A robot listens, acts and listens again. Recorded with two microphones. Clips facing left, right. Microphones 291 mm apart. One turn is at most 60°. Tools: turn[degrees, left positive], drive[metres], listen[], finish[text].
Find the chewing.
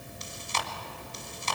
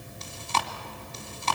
Thought: The chewing: about 65° right or 115° right.
Action: turn[-60]
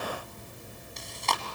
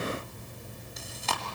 Action: finish[Found it: chewing, straight ahead, 1 to 2 m away.]